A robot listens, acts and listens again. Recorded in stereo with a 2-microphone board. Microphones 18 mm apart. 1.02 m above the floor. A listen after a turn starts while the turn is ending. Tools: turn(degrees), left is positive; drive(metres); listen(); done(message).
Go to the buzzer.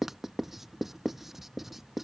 listen()
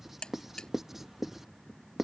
turn(degrees=45)
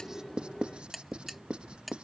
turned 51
drive(metres=1.0)
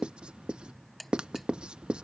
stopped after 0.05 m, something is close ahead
done("Something is in my way. I am facing the buzzer but have not reached it.")